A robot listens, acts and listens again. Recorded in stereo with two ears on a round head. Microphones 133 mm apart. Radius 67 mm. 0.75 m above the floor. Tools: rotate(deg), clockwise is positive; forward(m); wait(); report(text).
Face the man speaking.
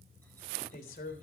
rotate(-65)
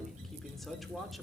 report("Facing the man speaking.")